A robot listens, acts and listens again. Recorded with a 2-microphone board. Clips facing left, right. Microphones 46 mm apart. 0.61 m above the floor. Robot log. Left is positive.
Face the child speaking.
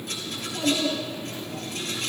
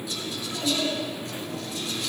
cmd yaw +30
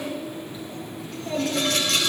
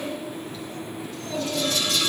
note: So it is at 160° left.
cmd yaw +160
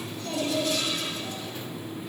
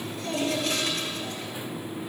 end: Found it: a child speaking, straight ahead.